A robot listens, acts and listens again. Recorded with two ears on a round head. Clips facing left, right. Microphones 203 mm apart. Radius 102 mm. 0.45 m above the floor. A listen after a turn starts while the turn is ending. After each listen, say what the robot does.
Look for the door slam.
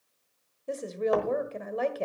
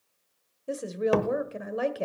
Turn 40° right.
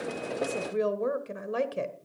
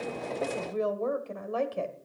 Keep listening.
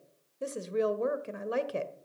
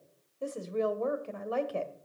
I heard a door slam, but can't make it out now. It was about straight ahead or 100° right.